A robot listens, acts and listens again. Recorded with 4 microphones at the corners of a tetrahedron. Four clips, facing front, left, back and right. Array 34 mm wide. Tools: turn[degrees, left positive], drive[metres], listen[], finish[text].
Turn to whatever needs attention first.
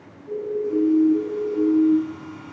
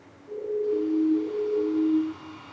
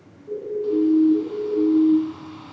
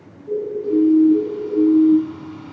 Thought: The siren: 95° right.
Action: turn[-95]
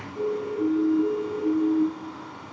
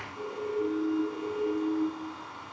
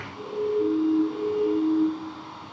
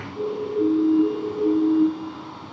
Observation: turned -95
Thought: The siren is now 40° right.
Action: turn[-40]
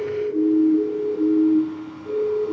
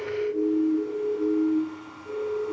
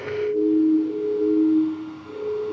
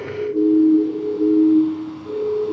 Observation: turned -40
Action: finish[Facing the siren, over 4 m away.]